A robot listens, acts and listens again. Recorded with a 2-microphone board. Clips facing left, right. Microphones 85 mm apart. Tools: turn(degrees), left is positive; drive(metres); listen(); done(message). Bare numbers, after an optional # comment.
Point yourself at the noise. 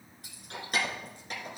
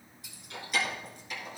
# The keys jangling: about 55° left or 125° left.
turn(55)
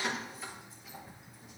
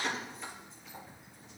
done("Facing the keys jangling.")